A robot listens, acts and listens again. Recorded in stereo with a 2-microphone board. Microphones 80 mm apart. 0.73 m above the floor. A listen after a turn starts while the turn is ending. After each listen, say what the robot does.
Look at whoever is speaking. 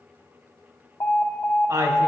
Turn 45° right.
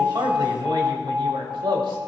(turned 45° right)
Turn 90° right.
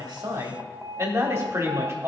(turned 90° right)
Turn 35° right.
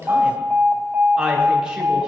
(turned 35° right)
Turn 10° right.
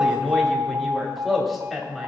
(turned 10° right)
Found it: a woman speaking, straight ahead.